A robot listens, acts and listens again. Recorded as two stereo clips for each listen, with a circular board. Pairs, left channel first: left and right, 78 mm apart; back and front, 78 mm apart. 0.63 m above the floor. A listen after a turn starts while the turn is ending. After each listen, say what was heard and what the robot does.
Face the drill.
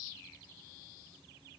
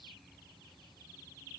Keep listening.
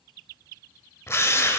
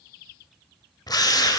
The drill: 145° left. Turn 145° left.
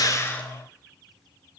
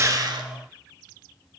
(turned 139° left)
Nothing new. It was at 10° left. Turn 10° left.
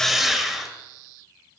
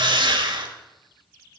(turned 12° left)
Found it: a drill, straight ahead.